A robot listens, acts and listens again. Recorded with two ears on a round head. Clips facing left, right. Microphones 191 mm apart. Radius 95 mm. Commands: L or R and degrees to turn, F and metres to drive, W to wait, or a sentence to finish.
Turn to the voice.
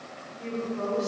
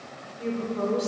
R50
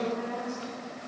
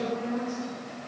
Found it: a woman speaking, straight ahead, 2 to 4 m away.